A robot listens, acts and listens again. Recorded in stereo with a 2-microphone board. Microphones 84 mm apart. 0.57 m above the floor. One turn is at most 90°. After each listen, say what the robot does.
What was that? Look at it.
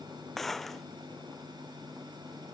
Turn 30° left.
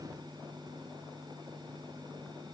Keep listening.
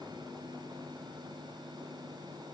I heard a gunshot, but can't make it out now. It was about 25° right or 145° left.